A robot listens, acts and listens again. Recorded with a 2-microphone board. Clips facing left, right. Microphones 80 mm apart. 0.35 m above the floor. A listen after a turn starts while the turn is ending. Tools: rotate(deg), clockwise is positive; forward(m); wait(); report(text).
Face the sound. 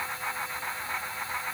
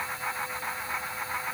wait()
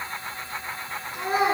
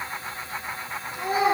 rotate(-50)
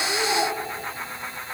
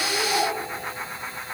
wait()
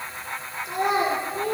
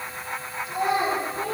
rotate(-80)
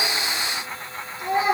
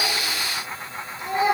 rotate(-25)
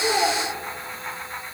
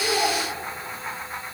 wait()
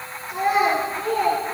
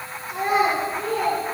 report("Facing the child speaking.")